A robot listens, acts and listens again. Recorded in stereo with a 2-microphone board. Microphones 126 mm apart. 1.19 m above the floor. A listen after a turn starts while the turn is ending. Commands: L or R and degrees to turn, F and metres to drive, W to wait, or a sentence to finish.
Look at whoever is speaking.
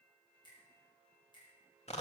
W
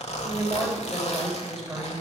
L30
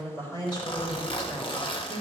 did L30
L145
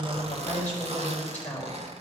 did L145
L15
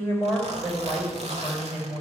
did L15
Facing the woman speaking.